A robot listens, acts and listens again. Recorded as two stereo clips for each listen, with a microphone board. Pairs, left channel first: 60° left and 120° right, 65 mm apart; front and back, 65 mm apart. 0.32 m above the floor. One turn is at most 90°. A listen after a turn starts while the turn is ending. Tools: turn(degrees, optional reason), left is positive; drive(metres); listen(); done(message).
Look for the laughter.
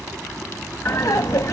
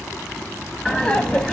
turn(degrees=75, reason="The laughter: 75° left.")
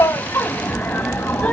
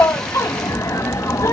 done("Found it: laughter, straight ahead.")